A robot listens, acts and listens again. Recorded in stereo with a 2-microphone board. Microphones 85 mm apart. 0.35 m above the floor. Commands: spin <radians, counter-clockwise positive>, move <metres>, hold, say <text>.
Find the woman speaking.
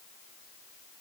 hold
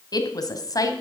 spin 0.79
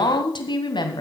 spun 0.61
spin 2.09
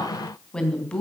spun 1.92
spin 0.26
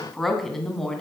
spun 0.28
say Found it: a woman speaking, straight ahead.